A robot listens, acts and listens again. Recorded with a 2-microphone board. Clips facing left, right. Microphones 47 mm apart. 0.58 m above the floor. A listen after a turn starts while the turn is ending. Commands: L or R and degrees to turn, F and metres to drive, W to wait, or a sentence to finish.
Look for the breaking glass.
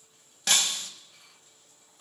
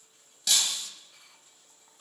L45
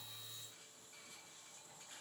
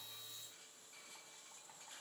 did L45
W
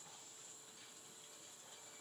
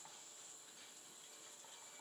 I heard breaking glass, but can't make it out now. It was about straight ahead or 90° left.